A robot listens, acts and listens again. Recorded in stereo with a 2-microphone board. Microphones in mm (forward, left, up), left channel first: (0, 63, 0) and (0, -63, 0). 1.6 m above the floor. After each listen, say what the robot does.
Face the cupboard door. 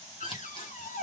Turn 90° left.
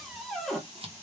Facing the cupboard door, 1 to 2 m away.